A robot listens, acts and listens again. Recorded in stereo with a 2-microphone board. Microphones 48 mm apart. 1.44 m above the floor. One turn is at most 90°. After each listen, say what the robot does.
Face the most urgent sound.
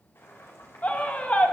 Turn 30° left.
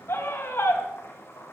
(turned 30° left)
Turn 90° left.
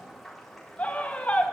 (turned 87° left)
Turn 30° left.
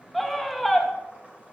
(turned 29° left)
Found it: a scream, straight ahead, 2 to 4 m away.